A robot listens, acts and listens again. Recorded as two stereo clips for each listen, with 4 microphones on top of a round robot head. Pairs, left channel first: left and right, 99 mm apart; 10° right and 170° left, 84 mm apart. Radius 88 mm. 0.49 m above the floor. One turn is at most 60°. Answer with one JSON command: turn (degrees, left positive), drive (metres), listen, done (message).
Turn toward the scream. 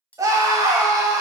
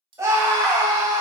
{"turn": -60}
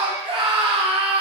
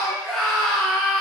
{"turn": -60}
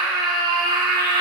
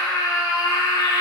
{"turn": -50}
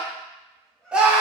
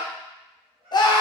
{"turn": -10}
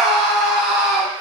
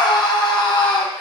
{"done": "Found it: a scream, straight ahead."}